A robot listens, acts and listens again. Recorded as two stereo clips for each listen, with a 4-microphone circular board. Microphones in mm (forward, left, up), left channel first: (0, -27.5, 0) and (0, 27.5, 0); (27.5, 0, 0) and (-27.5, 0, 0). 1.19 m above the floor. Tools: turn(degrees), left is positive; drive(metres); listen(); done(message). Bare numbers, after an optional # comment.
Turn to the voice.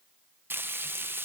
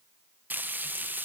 listen()
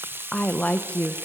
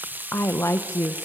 # The woman speaking: 25° right.
turn(-25)
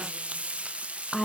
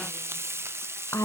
done("Facing the woman speaking, 1 to 2 m away.")